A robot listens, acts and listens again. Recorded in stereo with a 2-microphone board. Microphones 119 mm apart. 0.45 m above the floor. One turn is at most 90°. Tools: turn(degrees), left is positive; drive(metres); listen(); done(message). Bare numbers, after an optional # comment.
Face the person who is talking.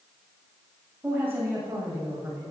# The woman speaking: about 15° right or 165° right.
turn(-15)
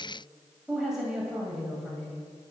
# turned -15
done("Found it: a woman speaking, straight ahead.")